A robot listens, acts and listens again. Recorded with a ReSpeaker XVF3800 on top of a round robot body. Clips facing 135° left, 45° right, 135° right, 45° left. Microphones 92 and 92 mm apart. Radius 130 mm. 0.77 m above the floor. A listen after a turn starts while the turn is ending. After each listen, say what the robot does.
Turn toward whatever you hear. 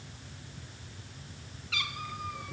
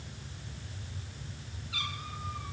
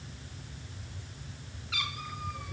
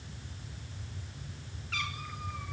Turn 140° left.
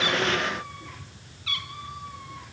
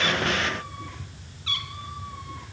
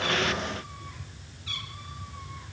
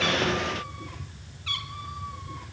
Turn 15° left.
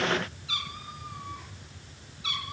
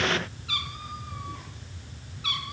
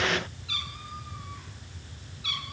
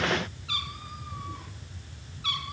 Found it: a cat meowing, straight ahead, over 4 m away.